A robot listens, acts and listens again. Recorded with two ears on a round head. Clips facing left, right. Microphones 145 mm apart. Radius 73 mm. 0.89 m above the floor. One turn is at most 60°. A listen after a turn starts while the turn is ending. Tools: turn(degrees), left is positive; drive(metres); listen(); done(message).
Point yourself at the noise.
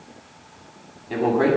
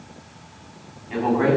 turn(degrees=50)
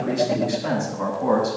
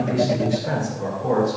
turn(degrees=60)
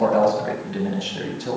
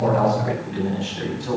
turn(degrees=45)
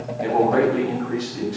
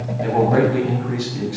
turn(degrees=-10)
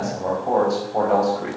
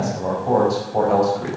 done("Facing the man speaking, over 4 m away.")